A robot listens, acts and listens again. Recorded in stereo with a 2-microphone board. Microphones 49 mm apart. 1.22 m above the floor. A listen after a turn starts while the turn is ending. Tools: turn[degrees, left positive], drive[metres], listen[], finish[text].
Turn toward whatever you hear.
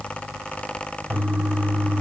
Thought: The toilet flushing: about 35° right or 145° right.
Action: turn[-35]
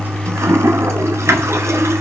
Thought: So it is at 110° right.
Action: turn[-110]
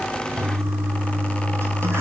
Thought: The toilet flushing is now 60° right.
Action: turn[-60]
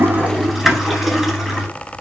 Action: finish[Found it: a toilet flushing, straight ahead, over 4 m away.]